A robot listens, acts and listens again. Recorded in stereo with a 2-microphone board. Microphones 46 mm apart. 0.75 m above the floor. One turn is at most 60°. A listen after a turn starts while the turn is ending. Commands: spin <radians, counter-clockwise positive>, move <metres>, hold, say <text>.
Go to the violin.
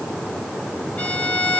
spin 0.44
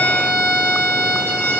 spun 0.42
spin 1.05
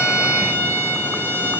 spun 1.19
spin 1.05
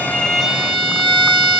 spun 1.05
move 1.0
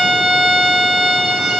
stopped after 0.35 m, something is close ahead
say Blocked. The violin is further on, straight ahead.